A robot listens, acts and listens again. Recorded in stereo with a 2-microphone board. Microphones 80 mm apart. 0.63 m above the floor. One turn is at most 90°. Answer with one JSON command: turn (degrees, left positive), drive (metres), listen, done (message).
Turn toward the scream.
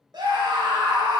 {"turn": -70}
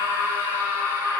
{"turn": -35}
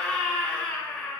{"turn": 10}
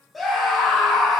{"done": "Facing the scream, 2 to 4 m away."}